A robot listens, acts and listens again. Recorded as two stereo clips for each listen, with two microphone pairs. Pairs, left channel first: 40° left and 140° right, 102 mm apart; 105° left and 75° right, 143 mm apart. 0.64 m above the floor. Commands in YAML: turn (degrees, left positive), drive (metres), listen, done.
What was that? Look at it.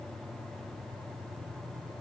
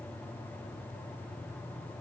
listen: true
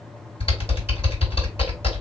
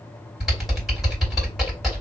turn: 15
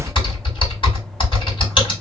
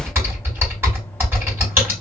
done: "Facing the typing on a keyboard, 2 to 4 m away."